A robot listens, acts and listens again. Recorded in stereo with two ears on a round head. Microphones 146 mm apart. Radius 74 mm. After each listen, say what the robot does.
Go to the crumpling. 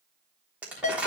Turn 30° right.
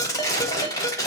Turn 20° left.
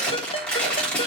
Drive 1.0 m forward.
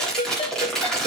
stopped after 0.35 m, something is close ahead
Blocked. The crumpling is further on, straight ahead.